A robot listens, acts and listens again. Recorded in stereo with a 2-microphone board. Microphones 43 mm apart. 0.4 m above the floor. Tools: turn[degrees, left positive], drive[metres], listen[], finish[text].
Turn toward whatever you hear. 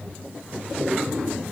Action: listen[]
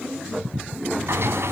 Action: turn[-90]
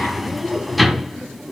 Action: finish[Found it: a sliding door, straight ahead, 1 to 2 m away.]